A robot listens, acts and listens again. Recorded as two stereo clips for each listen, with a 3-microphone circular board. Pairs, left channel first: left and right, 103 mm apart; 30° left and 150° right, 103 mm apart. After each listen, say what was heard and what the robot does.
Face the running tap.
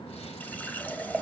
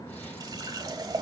The running tap: 165° left. Turn 165° left.
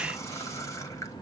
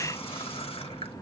The running tap is now 35° left. Turn 35° left.
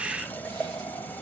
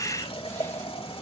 The running tap is now 20° left. Turn 20° left.
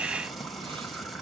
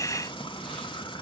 Facing the running tap.